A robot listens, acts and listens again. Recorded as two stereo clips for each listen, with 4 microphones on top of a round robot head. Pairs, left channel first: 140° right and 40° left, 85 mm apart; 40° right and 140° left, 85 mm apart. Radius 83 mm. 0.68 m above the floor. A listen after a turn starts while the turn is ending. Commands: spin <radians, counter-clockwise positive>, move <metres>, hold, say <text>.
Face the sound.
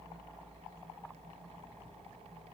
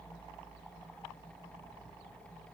hold
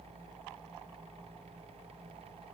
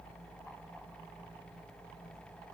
hold
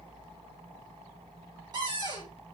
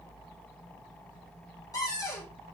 say Facing the cupboard door, 2 to 4 m away.